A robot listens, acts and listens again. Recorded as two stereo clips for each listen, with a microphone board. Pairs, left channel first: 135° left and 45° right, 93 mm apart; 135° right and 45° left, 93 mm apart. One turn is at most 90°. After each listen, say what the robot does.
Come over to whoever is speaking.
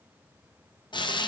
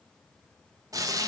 Keep listening.
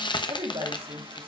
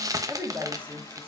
Turn 25° right.
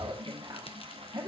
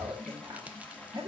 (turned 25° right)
Drive 1.0 m forward.
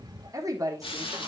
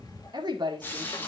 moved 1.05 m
Turn 10° left.
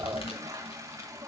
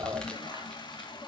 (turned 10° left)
Drive 1.0 m forward.
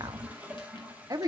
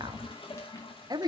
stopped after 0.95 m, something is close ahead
Arrived at the woman speaking, straight ahead.